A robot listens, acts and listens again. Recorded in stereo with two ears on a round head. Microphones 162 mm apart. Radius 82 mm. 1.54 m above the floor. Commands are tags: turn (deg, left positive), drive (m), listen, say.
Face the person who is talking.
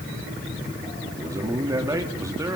<turn deg="-20"/>
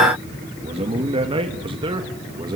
<turn deg="-30"/>
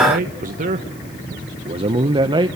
<turn deg="-25"/>
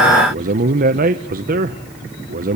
<turn deg="-130"/>
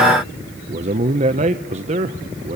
<turn deg="-35"/>
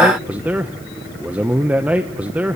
<turn deg="-10"/>
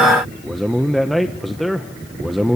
<say>Facing the man speaking.</say>